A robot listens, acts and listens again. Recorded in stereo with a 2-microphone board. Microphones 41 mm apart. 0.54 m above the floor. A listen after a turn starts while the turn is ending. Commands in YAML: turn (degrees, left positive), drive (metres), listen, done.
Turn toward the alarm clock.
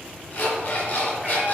turn: 55
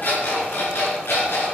turn: 70
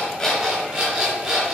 turn: -20
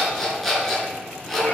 done: "Found it: an alarm clock, straight ahead, 2 to 4 m away."